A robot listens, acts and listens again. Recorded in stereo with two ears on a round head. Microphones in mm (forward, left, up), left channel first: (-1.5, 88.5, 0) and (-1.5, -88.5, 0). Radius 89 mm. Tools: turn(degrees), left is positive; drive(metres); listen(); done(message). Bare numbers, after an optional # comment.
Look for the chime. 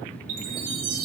turn(-90)
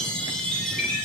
done("Facing the chime, over 4 m away.")